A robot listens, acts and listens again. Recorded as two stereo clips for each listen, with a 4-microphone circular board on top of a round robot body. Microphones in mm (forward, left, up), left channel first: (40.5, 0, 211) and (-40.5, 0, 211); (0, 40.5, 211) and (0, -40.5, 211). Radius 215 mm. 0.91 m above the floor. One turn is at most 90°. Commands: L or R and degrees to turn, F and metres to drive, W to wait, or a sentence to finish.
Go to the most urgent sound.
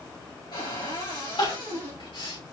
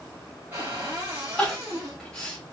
F1.0
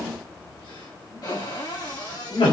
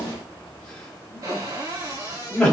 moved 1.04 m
L10
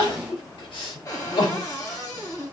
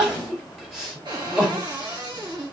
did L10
F1.0
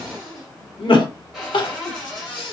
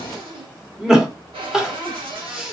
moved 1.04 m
F1.0
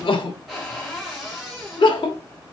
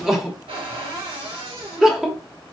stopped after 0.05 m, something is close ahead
Arrived at the crying, straight ahead.